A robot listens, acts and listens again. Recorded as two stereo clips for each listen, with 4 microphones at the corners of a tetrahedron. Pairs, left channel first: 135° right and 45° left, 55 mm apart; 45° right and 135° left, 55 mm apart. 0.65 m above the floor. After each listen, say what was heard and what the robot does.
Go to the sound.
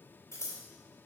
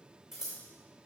The scissors: 140° right. Turn 140° right.
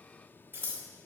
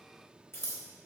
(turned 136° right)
Drive 1.0 m forward.
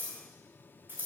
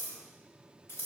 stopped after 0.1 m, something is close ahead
Blocked. The scissors is further on, straight ahead.